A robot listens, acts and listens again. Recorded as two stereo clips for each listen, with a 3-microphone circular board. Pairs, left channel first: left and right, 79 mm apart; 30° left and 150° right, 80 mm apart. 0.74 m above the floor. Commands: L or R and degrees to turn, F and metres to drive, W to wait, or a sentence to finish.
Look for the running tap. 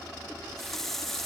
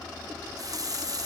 L175
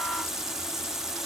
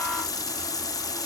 Facing the running tap, under 1 m away.